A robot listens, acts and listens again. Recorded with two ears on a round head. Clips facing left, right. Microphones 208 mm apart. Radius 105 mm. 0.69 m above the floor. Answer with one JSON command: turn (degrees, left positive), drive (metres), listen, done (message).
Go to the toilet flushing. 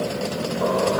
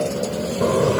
{"turn": -35}
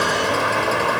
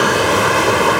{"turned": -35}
{"turn": -110}
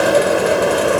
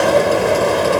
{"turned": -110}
{"drive": 1.0}
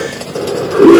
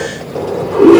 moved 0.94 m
{"turn": 15}
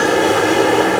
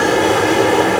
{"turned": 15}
{"drive": 1.0}
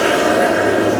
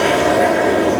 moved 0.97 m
{"turn": 10}
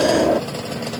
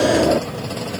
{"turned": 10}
{"drive": 1.0}
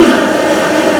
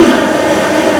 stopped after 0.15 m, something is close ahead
{"done": "Arrived at the toilet flushing, straight ahead."}